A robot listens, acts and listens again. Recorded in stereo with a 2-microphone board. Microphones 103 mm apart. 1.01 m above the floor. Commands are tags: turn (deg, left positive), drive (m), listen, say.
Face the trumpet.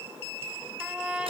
<turn deg="-30"/>
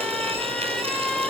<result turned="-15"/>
<say>Found it: a trumpet, straight ahead, 2 to 4 m away.</say>